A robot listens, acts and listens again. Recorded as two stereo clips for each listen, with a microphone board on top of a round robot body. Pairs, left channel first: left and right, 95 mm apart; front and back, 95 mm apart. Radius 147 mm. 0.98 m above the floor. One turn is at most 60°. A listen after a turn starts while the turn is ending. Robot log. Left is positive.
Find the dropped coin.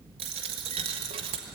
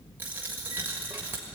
note: The dropped coin: 110° right.
cmd yaw -60
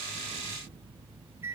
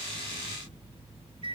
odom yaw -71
note: Nothing new. It was at 40° right.
cmd yaw -40
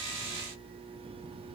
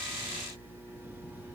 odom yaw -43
end: Facing where the dropped coin came from. I can't hear it now.